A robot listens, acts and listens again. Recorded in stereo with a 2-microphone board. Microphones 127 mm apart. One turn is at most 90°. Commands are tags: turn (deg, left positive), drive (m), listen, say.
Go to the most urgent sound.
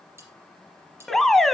<turn deg="30"/>
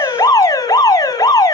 <turn deg="90"/>
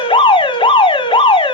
<turn deg="50"/>
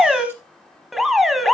<drive m="1.0"/>
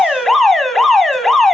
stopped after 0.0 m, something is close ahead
<say>Blocked. The alarm is further on, straight ahead.</say>